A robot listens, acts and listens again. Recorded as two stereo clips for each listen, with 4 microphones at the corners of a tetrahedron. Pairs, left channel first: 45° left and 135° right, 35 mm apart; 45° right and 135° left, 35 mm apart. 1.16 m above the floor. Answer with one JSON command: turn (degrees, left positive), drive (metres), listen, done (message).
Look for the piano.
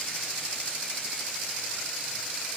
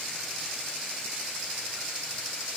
{"listen": true}
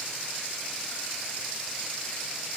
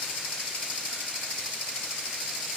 {"listen": true}
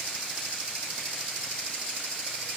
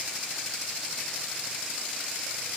{"done": "I can't make out a piano to turn to."}